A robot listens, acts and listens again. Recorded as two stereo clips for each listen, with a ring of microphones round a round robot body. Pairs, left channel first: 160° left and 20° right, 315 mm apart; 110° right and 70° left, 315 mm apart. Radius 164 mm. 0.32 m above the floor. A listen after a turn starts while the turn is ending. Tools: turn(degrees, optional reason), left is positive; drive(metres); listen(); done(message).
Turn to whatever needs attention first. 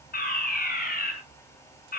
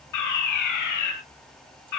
turn(degrees=-140, reason="The fire alarm: 140° right.")
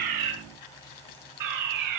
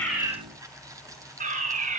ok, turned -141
done("Found it: a fire alarm, straight ahead, over 4 m away.")